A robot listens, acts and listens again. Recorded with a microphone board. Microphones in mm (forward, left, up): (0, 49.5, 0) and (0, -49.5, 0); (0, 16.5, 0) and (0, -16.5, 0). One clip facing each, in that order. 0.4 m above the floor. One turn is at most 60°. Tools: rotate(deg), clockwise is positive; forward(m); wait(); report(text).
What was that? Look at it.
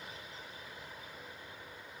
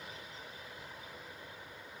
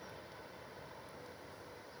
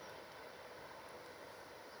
wait()
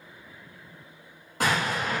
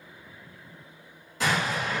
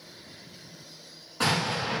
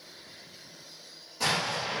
rotate(-60)
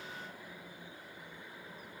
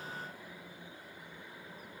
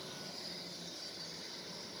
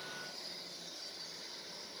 wait()
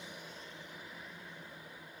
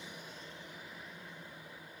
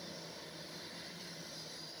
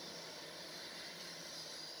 report("I heard an explosion, but can't make it out now. It was about straight ahead or 60° left.")